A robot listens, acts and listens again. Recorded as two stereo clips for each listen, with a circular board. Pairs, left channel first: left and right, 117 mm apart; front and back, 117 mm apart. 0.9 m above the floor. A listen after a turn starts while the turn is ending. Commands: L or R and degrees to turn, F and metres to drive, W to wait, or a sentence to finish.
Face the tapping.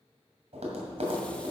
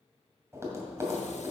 R115
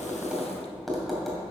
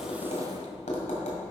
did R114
Facing the tapping.